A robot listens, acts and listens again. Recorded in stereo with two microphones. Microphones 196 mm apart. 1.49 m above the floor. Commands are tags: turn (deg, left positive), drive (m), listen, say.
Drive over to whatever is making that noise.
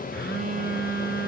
<turn deg="65"/>
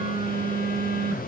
<turn deg="45"/>
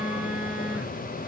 <turn deg="-10"/>
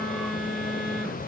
<drive m="1.0"/>
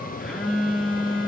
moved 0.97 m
<drive m="1.0"/>
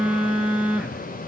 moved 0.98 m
<drive m="1.0"/>
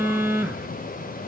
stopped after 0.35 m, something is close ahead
<turn deg="-15"/>
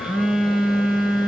<say>I am next to the phone buzzing.</say>